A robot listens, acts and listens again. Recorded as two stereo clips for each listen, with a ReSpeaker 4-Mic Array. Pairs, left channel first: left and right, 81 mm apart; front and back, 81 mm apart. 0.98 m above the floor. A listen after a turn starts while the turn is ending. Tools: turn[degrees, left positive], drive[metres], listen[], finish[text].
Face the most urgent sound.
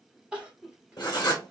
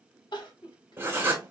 Thought: The crying: 10° right.
Action: turn[-10]
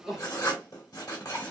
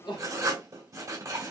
Action: listen[]
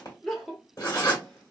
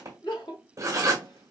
Action: finish[Found it: crying, straight ahead, 1 to 2 m away.]